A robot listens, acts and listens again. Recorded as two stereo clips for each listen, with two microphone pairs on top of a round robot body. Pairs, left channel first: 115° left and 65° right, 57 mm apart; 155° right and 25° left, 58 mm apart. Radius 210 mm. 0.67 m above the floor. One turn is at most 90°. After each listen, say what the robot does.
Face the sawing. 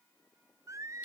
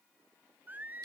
Keep listening.
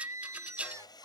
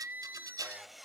Turn 90° left.
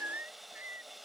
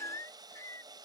Turn 20° left.
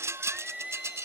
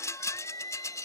Keep listening.
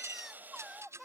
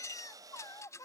Facing the sawing.